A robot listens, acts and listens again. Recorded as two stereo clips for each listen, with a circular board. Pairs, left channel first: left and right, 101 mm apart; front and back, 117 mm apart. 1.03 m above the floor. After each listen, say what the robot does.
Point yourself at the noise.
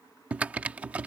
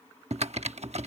Turn 165° right.
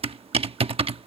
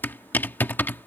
Turn 70° right.
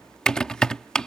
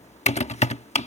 Turn 10° left.
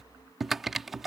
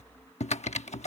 Facing the typing on a keyboard.